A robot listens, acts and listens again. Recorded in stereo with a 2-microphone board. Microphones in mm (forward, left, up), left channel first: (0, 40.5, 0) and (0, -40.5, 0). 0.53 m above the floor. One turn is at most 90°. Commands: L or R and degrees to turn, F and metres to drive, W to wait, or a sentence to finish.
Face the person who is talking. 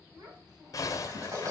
R70
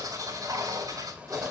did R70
W
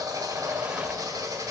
W
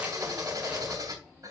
I heard a child speaking, but can't make it out now. It was about straight ahead or 40° right.